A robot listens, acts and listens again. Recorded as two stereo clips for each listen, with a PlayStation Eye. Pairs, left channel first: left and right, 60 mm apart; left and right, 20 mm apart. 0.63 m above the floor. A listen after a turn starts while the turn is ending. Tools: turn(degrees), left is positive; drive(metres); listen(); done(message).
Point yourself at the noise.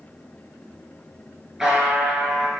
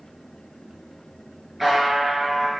turn(degrees=-30)
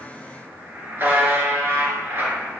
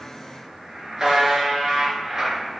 turn(degrees=-140)
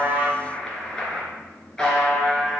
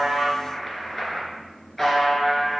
turn(degrees=10)
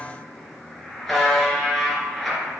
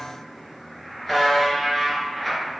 done("Facing the buzzer, 2 to 4 m away.")